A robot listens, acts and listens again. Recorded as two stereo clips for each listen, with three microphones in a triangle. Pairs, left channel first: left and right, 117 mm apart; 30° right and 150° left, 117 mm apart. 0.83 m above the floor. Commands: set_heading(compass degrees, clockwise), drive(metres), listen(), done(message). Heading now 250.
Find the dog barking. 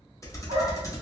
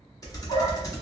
set_heading(315)
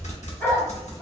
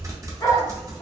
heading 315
set_heading(300)
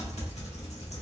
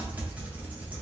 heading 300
listen()
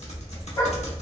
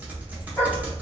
set_heading(260)
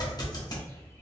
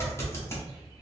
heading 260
listen()
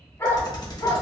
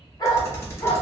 set_heading(230)
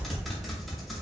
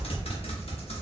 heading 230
listen()
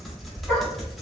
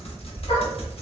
done("Facing the dog barking.")